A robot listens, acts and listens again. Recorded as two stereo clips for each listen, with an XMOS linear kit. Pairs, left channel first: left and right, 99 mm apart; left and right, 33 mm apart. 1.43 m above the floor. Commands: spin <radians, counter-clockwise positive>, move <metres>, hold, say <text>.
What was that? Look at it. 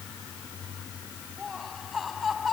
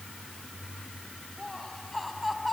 spin 0.52
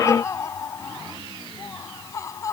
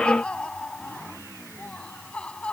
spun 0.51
spin 2.53
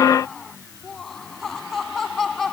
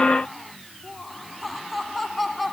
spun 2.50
say Facing the laughter.